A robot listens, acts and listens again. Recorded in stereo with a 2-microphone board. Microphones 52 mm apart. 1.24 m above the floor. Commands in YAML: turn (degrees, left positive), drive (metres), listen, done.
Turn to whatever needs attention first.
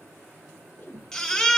turn: 30
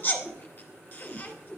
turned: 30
turn: 135
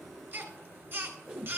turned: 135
turn: -45
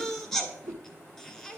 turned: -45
turn: 10
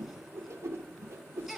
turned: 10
done: "Found it: a baby crying, straight ahead."